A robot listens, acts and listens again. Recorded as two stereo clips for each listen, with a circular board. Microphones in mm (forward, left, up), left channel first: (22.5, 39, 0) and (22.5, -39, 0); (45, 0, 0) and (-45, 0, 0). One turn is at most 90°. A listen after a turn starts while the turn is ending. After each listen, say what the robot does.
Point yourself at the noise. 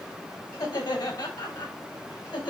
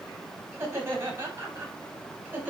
Turn 90° left.
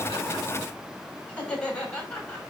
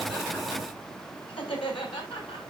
Turn 15° left.
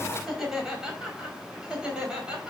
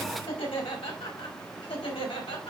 Turn 10° right.
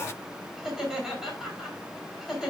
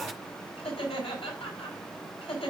Found it: laughter, straight ahead.